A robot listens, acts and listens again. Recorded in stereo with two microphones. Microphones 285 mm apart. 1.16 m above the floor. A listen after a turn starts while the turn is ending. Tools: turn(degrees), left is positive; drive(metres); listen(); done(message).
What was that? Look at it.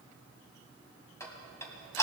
turn(degrees=30)
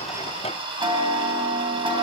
turn(degrees=-20)
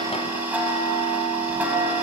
done("Found it: ticking, straight ahead.")